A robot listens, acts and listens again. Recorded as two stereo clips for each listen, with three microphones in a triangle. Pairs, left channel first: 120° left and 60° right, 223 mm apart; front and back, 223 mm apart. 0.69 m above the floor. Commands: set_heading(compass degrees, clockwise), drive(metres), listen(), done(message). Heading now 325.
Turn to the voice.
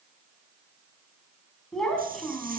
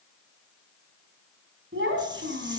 set_heading(115)
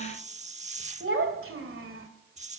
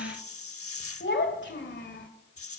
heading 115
set_heading(150)
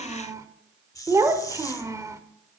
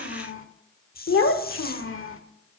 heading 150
set_heading(135)
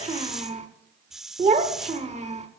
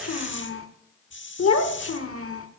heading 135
done("Facing the child speaking.")